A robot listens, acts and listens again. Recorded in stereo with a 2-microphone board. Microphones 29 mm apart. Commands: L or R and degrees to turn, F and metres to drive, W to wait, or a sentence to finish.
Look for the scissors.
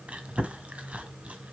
W
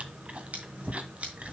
R45
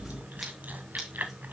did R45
W
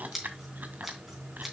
Found it: scissors, straight ahead.